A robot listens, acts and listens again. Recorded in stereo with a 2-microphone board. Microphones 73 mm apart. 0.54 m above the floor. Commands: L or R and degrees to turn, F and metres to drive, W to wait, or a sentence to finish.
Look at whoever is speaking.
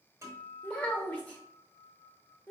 L20
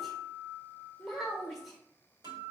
Found it: a child speaking, straight ahead, 1 to 2 m away.